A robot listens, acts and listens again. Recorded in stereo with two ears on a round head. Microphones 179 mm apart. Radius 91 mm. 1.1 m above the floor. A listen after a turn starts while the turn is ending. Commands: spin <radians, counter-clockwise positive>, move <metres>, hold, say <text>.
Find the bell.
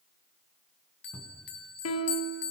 spin 1.05
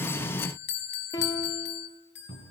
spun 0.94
spin 1.05
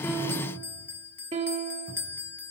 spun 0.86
spin 0.17
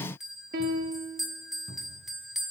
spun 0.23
say Found it: a bell, straight ahead, 2 to 4 m away.